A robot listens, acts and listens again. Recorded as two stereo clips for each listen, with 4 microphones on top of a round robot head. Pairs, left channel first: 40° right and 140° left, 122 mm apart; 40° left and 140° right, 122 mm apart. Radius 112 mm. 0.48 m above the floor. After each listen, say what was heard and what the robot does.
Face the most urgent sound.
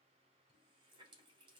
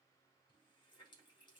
Keep listening.
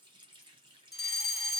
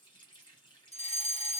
The fire alarm: 55° left. Turn 55° left.
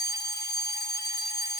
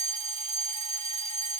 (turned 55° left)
The fire alarm is now 15° left. Turn 15° left.
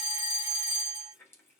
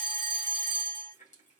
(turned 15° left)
Found it: a fire alarm, straight ahead.